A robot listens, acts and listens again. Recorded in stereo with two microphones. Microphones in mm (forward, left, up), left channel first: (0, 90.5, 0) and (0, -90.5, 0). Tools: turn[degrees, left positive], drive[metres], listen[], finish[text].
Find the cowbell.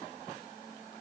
Action: listen[]
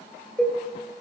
Action: turn[30]
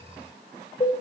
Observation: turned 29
Thought: So it is at 145° left.
Action: turn[145]
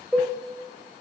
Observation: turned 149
Action: finish[Found it: a cowbell, straight ahead.]